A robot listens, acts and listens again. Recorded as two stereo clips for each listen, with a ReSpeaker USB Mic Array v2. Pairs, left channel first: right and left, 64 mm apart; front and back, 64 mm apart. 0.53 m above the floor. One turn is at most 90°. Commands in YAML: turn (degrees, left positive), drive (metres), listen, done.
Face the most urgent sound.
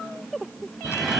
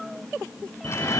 turn: 65
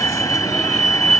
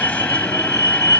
done: "Found it: a fire alarm, straight ahead."